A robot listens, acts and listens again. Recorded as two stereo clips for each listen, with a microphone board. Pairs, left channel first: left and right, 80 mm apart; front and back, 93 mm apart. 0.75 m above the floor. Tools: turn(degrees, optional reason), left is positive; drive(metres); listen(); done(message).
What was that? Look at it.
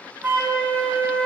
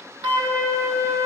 turn(degrees=-155, reason="The flute: 155° right.")
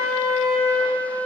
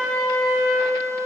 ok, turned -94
turn(degrees=-60, reason="The flute is now 60° right.")
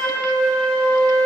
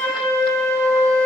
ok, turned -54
done("Facing the flute.")